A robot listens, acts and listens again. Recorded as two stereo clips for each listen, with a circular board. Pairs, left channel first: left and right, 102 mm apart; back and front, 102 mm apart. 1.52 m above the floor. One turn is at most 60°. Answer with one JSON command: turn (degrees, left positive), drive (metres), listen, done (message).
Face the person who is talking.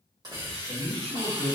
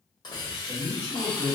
{"turn": 35}
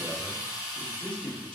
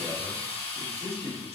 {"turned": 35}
{"turn": 10}
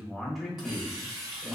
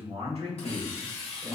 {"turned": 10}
{"done": "Found it: a man speaking, straight ahead, 1 to 2 m away."}